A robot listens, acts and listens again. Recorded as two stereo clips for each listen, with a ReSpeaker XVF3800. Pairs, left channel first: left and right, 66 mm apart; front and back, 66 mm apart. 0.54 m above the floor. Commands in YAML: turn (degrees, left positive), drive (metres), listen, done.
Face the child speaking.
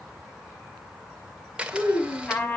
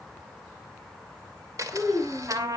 turn: 95
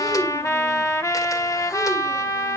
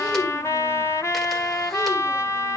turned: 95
listen: true
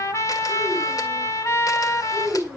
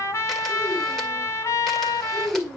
turn: -25
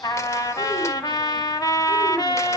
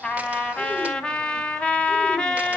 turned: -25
listen: true
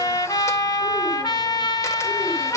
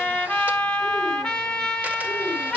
listen: true
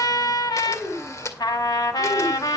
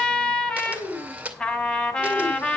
done: "Facing the child speaking, over 4 m away."